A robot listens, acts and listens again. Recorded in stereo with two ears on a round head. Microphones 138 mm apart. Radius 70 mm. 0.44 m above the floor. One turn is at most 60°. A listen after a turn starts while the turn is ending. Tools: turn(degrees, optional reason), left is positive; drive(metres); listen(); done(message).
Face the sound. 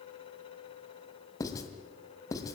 turn(degrees=25, reason="The writing: about 25° left or 155° left.")
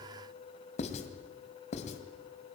turn(degrees=60, reason="So it is at 130° left.")
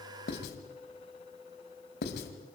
turn(degrees=60, reason="The writing is now 85° left.")
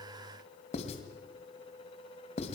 turn(degrees=45, reason="The writing is now 45° left.")
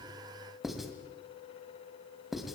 done("Found it: writing, straight ahead.")